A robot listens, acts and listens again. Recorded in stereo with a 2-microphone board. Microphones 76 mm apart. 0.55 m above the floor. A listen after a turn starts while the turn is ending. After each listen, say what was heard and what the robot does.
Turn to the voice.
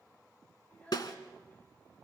The child speaking: about 20° left or 160° left. Turn 20° left.
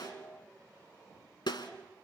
Keep listening.
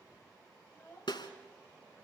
The child speaking: about 30° left or 150° left. Turn 30° left.
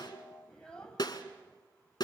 Turn 30° left.
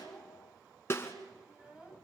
So it is at 15° right. Turn 15° right.
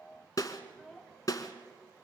Found it: a child speaking, straight ahead.